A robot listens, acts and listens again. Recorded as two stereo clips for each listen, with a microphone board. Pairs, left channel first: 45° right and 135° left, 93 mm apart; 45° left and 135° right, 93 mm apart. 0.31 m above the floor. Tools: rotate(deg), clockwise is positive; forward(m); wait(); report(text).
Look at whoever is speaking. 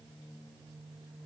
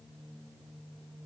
wait()
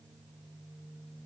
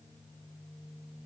wait()
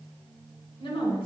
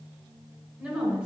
rotate(65)
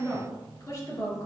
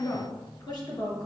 report("Facing the woman speaking, 2 to 4 m away.")